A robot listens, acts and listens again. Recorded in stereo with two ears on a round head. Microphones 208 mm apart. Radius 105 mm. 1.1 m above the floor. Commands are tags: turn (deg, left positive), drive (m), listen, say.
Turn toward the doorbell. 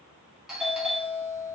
<turn deg="30"/>
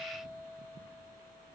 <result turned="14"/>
<turn deg="-15"/>
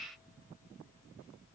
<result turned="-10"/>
<listen/>
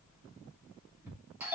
<turn deg="-10"/>
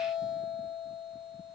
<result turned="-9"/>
<say>Facing the doorbell.</say>